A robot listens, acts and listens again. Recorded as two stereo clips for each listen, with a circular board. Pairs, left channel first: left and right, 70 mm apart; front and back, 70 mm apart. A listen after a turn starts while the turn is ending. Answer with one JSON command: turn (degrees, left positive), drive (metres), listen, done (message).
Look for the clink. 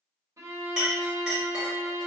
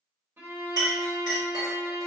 {"turn": -170}
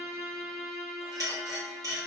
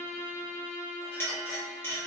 {"turn": -60}
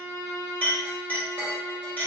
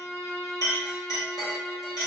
{"turn": 20}
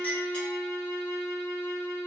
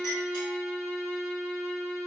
{"listen": true}
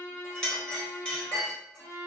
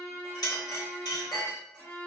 {"turn": 15}
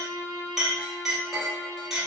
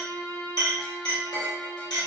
{"done": "Facing the clink, 1 to 2 m away."}